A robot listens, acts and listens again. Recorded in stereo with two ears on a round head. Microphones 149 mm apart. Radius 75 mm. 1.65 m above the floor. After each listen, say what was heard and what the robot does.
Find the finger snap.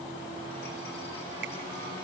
Keep listening.
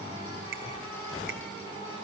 Keep listening.
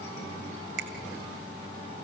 The finger snap: about 60° right or 120° right. Turn 60° right.
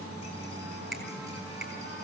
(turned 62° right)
Found it: a finger snap, straight ahead, 2 to 4 m away.